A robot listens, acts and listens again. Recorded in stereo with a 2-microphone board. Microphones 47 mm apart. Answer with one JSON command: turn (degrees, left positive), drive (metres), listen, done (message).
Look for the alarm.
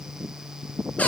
{"listen": true}
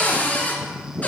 {"listen": true}
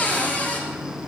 {"done": "I can't make out an alarm to turn to."}